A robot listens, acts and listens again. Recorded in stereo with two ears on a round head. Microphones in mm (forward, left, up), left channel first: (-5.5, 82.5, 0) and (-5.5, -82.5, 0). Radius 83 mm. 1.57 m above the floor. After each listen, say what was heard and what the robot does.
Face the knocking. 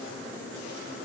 Keep listening.
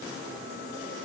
Keep listening.
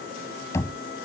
The knocking: about 15° left or 165° left. Turn 15° left.
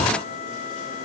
Keep listening.
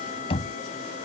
So it is at 150° left. Turn 150° left.
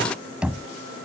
Found it: knocking, straight ahead.